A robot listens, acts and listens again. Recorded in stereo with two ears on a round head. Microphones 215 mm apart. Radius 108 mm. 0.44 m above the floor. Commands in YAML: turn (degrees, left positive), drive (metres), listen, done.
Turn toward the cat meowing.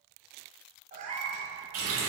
turn: -30
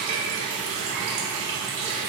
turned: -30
listen: true
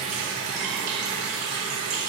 listen: true
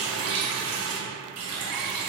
done: "I heard a cat meowing, but can't make it out now. It was about straight ahead or 120° right."